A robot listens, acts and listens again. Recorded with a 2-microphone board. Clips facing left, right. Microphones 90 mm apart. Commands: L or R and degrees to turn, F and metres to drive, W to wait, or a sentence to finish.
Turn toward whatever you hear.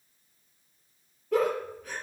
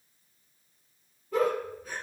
L90
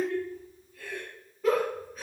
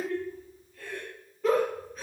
Facing the giggle.